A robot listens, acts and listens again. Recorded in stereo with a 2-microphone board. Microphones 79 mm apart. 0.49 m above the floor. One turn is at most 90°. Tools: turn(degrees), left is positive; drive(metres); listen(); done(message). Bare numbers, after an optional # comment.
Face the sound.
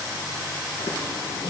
# The running tap: about 65° left or 115° left.
turn(65)
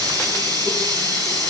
# So it is at 50° left.
turn(50)
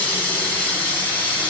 # The running tap is now 20° left.
turn(20)
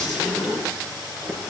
done("Facing the running tap.")